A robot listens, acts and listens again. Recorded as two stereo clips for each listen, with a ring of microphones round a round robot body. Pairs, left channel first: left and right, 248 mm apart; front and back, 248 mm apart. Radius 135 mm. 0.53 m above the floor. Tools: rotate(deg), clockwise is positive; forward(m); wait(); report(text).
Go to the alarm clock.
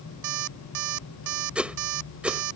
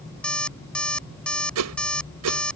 rotate(85)
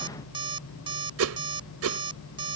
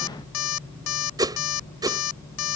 rotate(15)
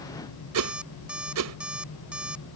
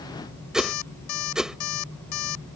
forward(1.0)
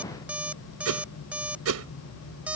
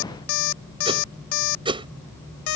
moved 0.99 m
forward(1.0)
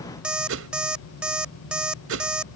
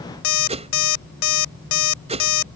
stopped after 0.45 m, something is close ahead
report("Arrived at the alarm clock, straight ahead.")